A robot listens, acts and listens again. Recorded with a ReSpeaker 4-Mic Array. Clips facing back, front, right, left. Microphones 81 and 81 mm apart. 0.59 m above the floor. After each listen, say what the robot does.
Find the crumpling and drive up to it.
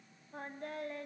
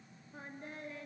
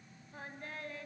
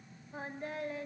Keep listening.
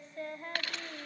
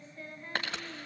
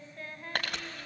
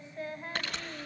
Turn 60° right.
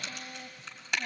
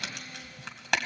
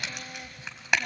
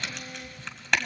Turn 10° right.
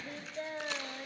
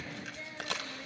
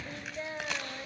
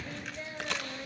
Drive 1.0 m forward.
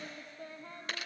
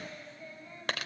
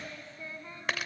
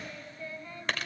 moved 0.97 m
Drive 1.0 m forward.
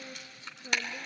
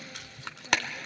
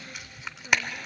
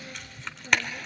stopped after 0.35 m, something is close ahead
Turn 10° right.
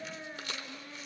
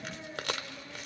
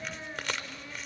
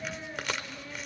Arrived at the crumpling, straight ahead.